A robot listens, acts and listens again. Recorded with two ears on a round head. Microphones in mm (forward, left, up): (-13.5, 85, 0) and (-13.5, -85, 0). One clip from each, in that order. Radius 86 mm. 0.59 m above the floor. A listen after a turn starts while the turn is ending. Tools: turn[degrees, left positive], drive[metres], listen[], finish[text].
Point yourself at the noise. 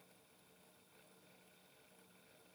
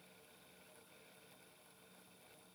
Action: listen[]
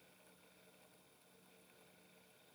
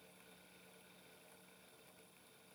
Action: listen[]
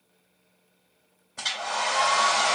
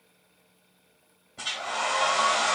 Thought: The hair dryer: about 65° left or 115° left.
Action: turn[65]
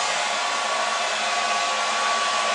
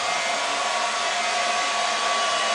Thought: So it is at 10° left.
Action: turn[10]
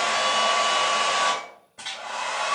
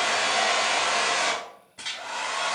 Action: finish[Found it: a hair dryer, straight ahead, 1 to 2 m away.]